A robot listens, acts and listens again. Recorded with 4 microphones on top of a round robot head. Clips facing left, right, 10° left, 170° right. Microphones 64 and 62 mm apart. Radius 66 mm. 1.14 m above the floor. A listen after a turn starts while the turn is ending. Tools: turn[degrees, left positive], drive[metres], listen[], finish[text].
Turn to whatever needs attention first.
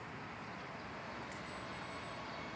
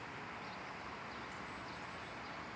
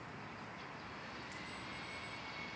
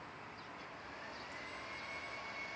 Action: listen[]
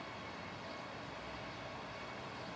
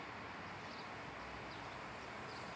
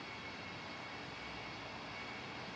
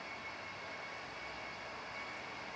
Action: listen[]
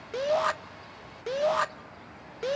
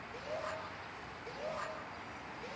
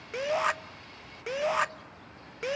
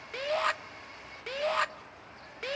Thought: The shout: 90° left.
Action: turn[90]
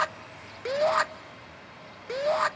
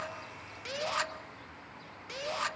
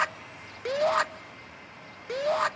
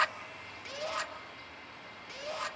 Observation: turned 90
Thought: The shout is now 45° left.
Action: turn[45]
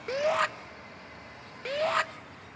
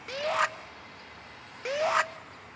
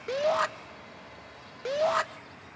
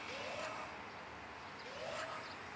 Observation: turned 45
Thought: The shout is now 10° right.
Action: turn[-10]
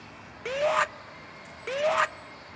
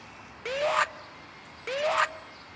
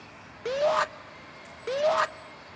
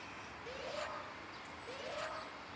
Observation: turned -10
Action: finish[Found it: a shout, straight ahead, 1 to 2 m away.]